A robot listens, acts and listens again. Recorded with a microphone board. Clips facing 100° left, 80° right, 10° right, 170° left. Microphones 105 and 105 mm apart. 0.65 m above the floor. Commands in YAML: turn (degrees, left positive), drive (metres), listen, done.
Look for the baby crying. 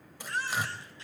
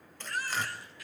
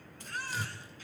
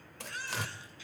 turn: 35
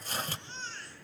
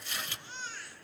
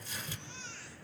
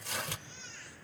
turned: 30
done: "Found it: a baby crying, straight ahead."